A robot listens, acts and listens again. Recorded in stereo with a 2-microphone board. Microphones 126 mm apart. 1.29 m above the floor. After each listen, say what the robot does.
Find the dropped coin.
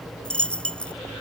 Turn 30° left.
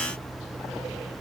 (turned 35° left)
Keep listening.
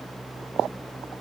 I heard a dropped coin, but can't make it out now. It was about 25° right or 135° left.